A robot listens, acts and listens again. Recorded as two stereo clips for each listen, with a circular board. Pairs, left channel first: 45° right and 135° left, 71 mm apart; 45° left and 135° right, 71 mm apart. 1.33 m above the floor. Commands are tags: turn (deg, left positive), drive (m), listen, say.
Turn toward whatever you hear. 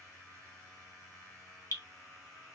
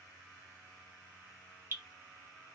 <turn deg="-80"/>
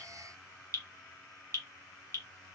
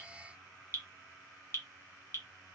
<say>Facing the dripping, 1 to 2 m away.</say>